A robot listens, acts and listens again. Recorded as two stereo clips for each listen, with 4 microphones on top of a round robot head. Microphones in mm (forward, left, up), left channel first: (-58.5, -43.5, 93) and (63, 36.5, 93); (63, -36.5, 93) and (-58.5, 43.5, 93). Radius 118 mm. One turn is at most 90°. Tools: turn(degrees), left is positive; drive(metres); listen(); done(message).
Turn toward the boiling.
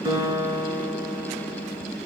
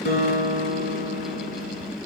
listen()
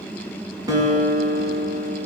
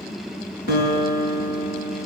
listen()
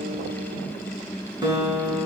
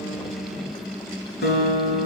done("I can't make out boiling, only a guitar.")